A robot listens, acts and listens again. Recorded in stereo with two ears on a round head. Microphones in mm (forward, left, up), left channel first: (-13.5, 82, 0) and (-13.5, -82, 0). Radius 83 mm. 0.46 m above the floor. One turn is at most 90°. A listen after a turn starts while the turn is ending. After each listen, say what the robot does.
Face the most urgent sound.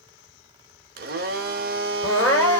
Turn 30° left.
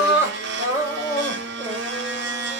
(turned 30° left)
Turn 20° right.
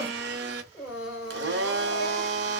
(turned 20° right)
Found it: crying, straight ahead, 2 to 4 m away.